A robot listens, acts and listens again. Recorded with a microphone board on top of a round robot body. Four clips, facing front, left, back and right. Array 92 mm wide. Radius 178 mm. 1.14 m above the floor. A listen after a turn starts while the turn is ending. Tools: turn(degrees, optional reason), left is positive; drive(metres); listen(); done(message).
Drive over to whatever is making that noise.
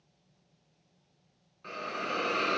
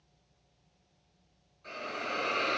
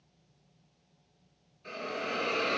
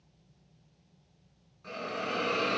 turn(degrees=-10, reason="The hiss: 10° right.")
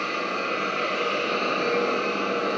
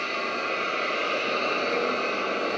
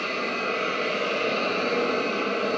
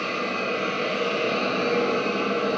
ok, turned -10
drive(metres=1.0)
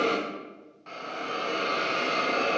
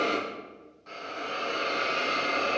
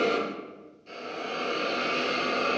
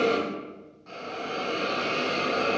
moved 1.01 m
drive(metres=1.0)
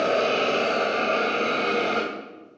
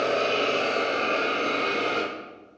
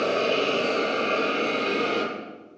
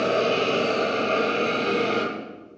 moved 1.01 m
drive(metres=1.0)
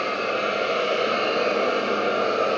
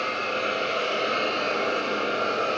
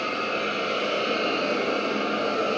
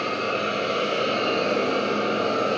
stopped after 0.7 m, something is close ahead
done("Arrived at the hiss, straight ahead.")